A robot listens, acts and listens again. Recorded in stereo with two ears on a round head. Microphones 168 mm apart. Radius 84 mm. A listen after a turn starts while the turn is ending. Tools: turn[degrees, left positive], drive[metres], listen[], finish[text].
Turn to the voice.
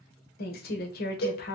Thought: The woman speaking: about 55° left or 125° left.
Action: turn[55]
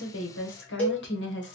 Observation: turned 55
Thought: So it is at 70° left.
Action: turn[70]
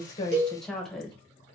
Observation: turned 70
Action: finish[Facing the woman speaking.]